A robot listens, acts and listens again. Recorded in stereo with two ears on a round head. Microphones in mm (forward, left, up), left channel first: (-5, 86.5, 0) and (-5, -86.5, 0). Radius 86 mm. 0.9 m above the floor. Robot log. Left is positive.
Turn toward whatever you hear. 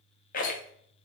note: The rattle: about 45° left or 135° left.
cmd yaw +45
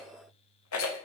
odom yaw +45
note: So it is at 90° left.
cmd yaw +90
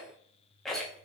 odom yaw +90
end: Facing the rattle, under 1 m away.